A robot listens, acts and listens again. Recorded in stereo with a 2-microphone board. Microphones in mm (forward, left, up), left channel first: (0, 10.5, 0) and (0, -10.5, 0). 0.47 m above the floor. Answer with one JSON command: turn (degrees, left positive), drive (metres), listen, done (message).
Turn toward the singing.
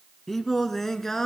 {"turn": 20}
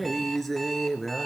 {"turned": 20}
{"turn": 30}
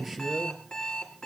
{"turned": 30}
{"turn": -10}
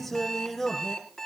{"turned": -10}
{"done": "Facing the singing, 2 to 4 m away."}